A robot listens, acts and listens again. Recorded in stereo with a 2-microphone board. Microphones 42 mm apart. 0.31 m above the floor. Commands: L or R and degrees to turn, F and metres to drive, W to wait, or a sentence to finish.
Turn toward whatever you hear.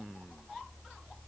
W
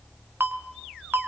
R60
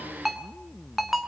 Facing the ringtone.